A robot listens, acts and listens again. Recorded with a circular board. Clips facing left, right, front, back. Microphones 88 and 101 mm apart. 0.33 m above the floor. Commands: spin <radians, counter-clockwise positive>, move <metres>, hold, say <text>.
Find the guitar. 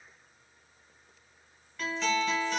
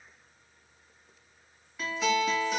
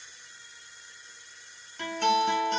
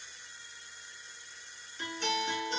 spin -0.17
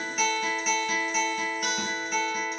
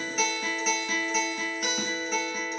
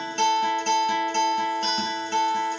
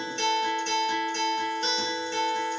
say Found it: a guitar, straight ahead, 1 to 2 m away.